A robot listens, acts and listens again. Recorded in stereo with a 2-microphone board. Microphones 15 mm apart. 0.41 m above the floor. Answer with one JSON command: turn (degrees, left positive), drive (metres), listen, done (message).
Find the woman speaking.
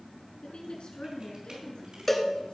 {"turn": 70}
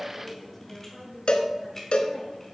{"done": "Facing the woman speaking."}